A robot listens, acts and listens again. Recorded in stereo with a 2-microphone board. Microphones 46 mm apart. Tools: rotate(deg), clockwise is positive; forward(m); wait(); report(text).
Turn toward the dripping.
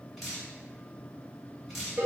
rotate(30)
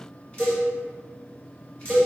rotate(-25)
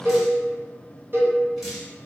report("Found it: dripping, straight ahead.")